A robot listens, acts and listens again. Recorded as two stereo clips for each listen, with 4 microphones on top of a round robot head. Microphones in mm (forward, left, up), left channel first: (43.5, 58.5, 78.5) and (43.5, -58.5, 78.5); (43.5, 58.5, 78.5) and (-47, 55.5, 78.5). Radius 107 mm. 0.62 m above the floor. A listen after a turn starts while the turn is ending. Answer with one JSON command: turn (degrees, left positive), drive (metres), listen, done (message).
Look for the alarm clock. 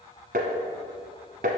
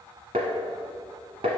{"listen": true}
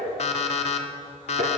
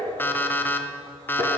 {"turn": 70}
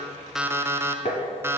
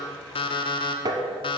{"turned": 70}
{"turn": -20}
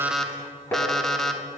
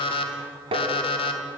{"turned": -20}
{"done": "Facing the alarm clock, under 1 m away."}